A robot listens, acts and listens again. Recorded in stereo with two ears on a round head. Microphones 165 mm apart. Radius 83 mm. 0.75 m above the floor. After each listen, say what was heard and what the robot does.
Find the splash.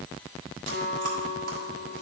Keep listening.
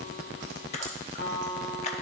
The splash: about 40° left or 140° left. Turn 40° left.
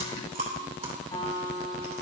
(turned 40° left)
Keep listening.
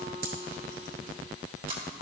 I heard a splash, but can't make it out now. It was about straight ahead or 100° left.